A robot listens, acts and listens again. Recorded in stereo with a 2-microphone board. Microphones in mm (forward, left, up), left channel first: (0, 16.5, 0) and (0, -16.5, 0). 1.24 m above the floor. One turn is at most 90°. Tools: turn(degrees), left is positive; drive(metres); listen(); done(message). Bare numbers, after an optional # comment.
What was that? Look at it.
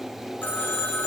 turn(90)
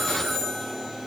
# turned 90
done("Found it: a phone ringing, straight ahead, 2 to 4 m away.")